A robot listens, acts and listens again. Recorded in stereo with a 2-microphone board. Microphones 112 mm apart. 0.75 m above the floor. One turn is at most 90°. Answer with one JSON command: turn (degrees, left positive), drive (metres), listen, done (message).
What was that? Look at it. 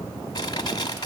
{"turn": 40}
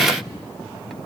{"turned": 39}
{"listen": true}
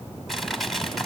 {"done": "Found it: crushing, straight ahead, 1 to 2 m away."}